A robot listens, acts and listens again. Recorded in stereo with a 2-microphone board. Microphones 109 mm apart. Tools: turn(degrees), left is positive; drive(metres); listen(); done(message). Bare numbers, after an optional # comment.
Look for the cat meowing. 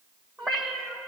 turn(30)
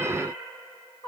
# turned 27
# So it is at 130° left.
turn(130)
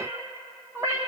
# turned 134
# The cat meowing is now 30° right.
turn(-30)
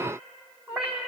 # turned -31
# The cat meowing is now 10° right.
turn(-10)
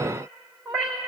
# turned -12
done("Facing the cat meowing.")